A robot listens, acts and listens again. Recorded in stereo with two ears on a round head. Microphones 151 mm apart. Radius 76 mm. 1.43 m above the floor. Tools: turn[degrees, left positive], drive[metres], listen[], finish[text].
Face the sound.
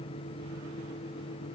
Action: listen[]
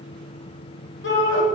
Action: turn[90]
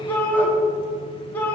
Thought: So it is at 10° left.
Action: turn[10]
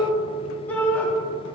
Thought: The shout is now 10° left.
Action: turn[10]
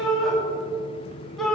Action: finish[Found it: a shout, straight ahead.]